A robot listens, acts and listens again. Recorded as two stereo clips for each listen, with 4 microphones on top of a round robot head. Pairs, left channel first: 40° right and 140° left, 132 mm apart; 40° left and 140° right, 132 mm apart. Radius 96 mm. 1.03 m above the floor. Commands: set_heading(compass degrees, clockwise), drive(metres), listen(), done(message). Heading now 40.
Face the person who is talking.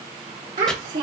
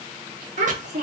set_heading(210)
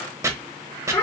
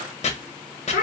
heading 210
set_heading(180)
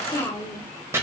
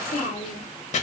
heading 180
set_heading(155)
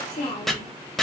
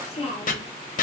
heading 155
done("Facing the child speaking.")